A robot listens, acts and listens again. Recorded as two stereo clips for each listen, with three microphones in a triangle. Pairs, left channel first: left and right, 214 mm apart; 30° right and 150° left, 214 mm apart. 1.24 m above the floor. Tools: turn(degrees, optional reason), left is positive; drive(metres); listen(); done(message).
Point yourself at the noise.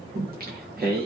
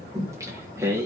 turn(degrees=-130, reason="The singing: 130° right.")
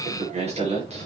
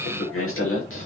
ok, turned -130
turn(degrees=-30, reason="The singing is now 30° right.")
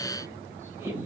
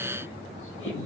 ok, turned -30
turn(degrees=-10, reason="The singing is now 10° right.")
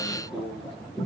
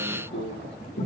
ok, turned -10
done("Found it: singing, straight ahead, over 4 m away.")